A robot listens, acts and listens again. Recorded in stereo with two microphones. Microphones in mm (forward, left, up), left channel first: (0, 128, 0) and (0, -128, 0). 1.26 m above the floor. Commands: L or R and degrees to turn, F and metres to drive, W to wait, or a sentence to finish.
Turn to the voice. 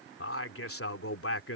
L60
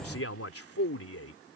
L60
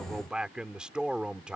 Facing the man speaking.